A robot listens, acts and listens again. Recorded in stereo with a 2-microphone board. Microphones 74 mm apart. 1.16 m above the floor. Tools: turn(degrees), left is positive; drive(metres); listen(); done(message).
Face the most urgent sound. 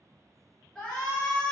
turn(degrees=30)
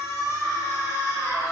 turn(degrees=140)
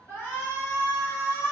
turn(degrees=30)
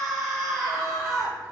done("Facing the shout, under 1 m away.")